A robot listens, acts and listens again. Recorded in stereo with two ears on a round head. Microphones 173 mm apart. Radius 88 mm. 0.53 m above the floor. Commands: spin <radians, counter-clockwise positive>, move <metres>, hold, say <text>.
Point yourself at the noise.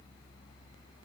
hold
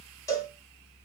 spin 0.26
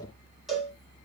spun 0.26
say Found it: a cowbell, straight ahead, 1 to 2 m away.